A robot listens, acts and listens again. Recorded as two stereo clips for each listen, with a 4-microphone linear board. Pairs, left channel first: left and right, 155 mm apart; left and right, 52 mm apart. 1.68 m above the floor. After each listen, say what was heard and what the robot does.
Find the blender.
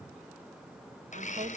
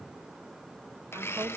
The blender: about 50° left or 130° left. Turn 50° left.
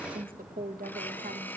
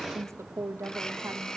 So it is at 15° left. Turn 15° left.
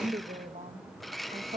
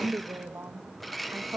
Found it: a blender, straight ahead, under 1 m away.